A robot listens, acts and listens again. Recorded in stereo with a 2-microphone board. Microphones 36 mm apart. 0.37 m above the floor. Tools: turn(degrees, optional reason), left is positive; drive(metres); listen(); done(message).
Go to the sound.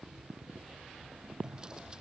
turn(degrees=-25, reason="The drawer: about 25° right or 155° right.")
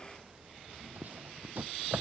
turn(degrees=-130, reason="So it is at 130° right.")
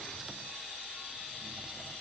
listen()
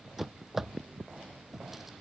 drive(metres=1.0)
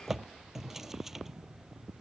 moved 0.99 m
turn(degrees=-10, reason="The drawer is now 10° right.")
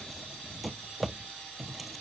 drive(metres=1.0)
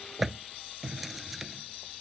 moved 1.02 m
drive(metres=1.0)
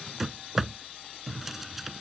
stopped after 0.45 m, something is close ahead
done("I am next to the drawer.")